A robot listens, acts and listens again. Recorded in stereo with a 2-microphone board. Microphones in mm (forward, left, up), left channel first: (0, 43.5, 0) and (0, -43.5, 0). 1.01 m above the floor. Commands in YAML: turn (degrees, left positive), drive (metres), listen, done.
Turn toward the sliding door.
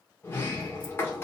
turn: 25
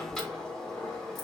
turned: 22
turn: 10
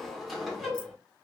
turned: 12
done: "Found it: a sliding door, straight ahead, 1 to 2 m away."